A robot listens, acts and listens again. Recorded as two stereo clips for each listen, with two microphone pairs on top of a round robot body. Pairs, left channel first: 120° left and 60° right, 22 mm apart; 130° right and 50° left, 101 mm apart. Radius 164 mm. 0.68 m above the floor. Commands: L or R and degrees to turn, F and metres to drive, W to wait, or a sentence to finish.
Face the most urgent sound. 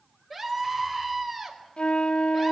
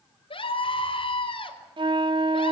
R150
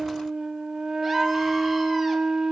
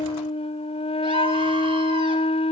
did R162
L10
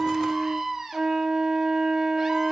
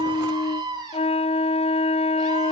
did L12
Facing the scream, over 4 m away.